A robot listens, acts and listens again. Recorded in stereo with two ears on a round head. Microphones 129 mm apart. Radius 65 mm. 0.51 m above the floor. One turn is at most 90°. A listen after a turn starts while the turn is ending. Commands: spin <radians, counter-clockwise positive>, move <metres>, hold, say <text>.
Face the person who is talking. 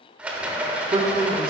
spin -0.61
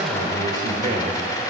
spin -1.57
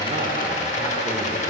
spin -0.17
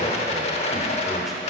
say Found it: a man speaking, straight ahead, 1 to 2 m away.